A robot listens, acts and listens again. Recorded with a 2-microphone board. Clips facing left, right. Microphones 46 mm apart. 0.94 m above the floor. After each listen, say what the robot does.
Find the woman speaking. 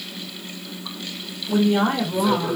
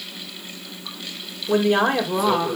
Turn 90° right.
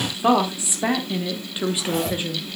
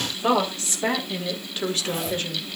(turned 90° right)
Turn 10° left.
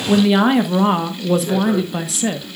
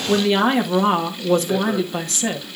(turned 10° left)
Found it: a woman speaking, straight ahead, 1 to 2 m away.